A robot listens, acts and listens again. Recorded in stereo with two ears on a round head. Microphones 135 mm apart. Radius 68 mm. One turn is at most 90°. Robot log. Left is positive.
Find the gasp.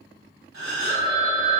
note: The gasp: about 70° right or 110° right.
cmd yaw -70
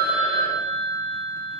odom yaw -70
cmd idle
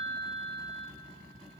end: I heard a gasp, but can't make it out now. It was about straight ahead or 40° right.